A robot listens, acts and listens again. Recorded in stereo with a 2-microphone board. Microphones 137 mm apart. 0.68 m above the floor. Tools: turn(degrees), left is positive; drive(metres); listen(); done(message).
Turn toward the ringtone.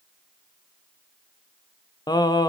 listen()
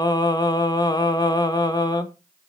listen()
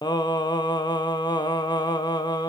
done("I can't make out a ringtone, only singing.")